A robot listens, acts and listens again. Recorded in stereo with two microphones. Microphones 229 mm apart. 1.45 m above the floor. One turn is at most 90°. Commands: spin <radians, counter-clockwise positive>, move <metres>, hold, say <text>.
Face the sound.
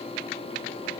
hold
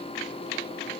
hold
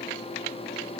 say I can't make out anything to turn to.